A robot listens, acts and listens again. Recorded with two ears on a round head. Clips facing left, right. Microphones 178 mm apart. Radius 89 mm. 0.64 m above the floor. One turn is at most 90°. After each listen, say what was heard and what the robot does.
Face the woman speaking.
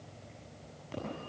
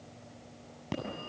Keep listening.
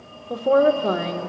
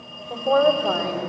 The woman speaking: about 40° left or 140° left. Turn 40° left.
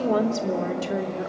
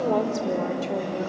So it is at 15° left. Turn 15° left.
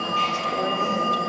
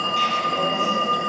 Keep listening.
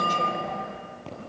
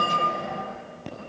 Keep listening.
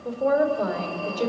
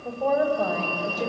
The woman speaking is now 15° left. Turn 15° left.
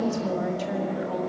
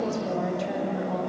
Found it: a woman speaking, straight ahead.